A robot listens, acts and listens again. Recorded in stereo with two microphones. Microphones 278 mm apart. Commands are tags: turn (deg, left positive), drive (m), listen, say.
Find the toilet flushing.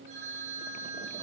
<listen/>
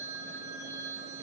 <listen/>
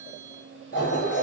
<turn deg="45"/>
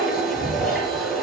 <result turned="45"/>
<say>Found it: a toilet flushing, straight ahead, over 4 m away.</say>